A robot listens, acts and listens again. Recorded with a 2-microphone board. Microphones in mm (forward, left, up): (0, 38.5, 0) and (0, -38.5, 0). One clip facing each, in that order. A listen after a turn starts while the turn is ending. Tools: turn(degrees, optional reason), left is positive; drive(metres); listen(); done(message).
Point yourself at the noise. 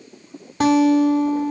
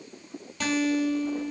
turn(degrees=40, reason="The guitar: about 40° left or 140° left.")
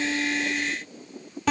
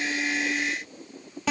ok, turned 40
done("Found it: a guitar, straight ahead.")